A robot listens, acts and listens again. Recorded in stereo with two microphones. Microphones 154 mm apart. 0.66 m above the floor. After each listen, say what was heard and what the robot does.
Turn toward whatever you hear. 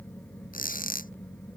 The squeak: about 60° left or 120° left. Turn 60° left.
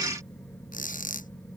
So it is at 60° left. Turn 60° left.
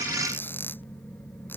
Keep listening.
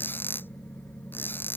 The squeak is now 15° left. Turn 15° left.
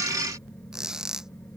Facing the squeak.